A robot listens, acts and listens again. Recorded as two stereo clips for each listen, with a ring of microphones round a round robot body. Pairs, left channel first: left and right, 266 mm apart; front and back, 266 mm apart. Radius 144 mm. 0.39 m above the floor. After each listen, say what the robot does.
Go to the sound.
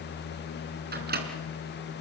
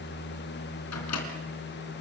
Turn 35° right.
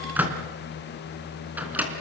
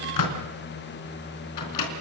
Drive 1.0 m forward.
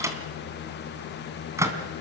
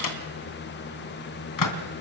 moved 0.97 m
Turn 10° right.
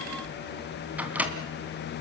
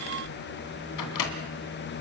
Drive 1.0 m forward.
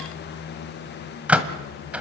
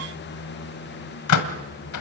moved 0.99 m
Drive 1.0 m forward.
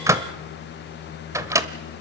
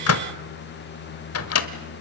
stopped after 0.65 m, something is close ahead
Turn 15° right.
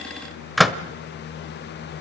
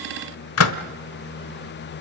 Arrived at the microwave, straight ahead.